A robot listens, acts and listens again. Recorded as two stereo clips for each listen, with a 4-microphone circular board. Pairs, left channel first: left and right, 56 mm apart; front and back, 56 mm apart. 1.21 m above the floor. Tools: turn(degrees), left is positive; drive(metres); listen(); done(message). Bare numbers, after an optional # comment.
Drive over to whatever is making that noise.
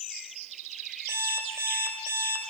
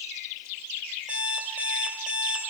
# The alarm clock: 120° right.
turn(-120)
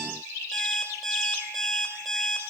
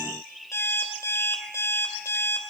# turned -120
drive(1.0)
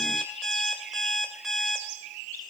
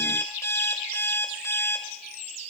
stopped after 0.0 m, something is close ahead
done("Blocked. The alarm clock is further on, straight ahead.")